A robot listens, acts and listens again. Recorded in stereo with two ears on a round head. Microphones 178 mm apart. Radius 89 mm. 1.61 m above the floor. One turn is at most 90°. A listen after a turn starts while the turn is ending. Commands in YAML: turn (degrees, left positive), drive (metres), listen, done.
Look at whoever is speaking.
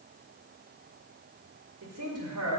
turn: -90
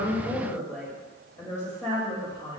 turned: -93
turn: 20
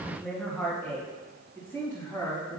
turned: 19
turn: 15
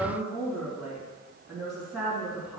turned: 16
done: "Found it: a woman speaking, straight ahead, 2 to 4 m away."